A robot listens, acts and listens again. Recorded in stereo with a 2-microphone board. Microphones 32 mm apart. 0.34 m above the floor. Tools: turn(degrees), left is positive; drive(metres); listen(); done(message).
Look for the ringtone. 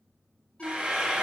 turn(degrees=40)
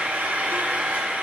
listen()
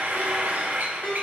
turn(degrees=95)
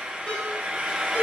turn(degrees=45)
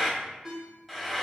turn(degrees=-10)
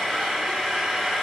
listen()
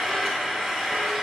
listen()
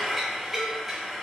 done("I heard a ringtone from this way, but can't make it out now.")